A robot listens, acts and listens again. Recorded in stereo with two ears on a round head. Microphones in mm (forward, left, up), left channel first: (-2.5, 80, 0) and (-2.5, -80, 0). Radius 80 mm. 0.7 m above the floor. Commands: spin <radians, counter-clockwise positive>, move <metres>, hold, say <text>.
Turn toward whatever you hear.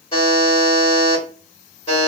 spin 0.52
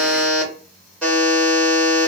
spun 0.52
say Found it: a buzzer, straight ahead, 1 to 2 m away.